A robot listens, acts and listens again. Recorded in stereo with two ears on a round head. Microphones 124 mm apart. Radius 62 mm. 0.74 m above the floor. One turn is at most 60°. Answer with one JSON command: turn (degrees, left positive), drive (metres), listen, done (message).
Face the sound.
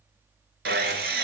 {"turn": -60}
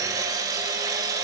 {"turn": -25}
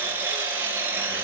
{"turn": -15}
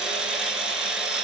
{"done": "Found it: sawing, straight ahead, 2 to 4 m away."}